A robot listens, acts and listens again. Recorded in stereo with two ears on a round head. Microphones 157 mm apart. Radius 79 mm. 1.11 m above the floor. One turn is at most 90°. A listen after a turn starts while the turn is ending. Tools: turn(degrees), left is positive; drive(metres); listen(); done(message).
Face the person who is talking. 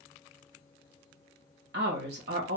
turn(degrees=-60)
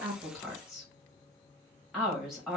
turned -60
done("Facing the woman speaking.")